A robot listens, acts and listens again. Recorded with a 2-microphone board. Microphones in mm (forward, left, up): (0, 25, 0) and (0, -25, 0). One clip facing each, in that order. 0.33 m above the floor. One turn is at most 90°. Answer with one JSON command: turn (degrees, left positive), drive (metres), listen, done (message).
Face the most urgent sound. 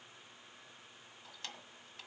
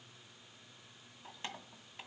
{"listen": true}
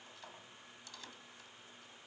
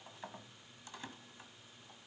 {"listen": true}
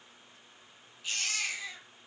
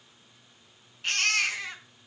{"turn": -65}
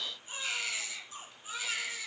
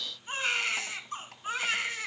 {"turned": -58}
{"turn": -55}
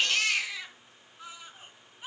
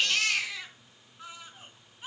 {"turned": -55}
{"done": "Facing the baby crying, 2 to 4 m away."}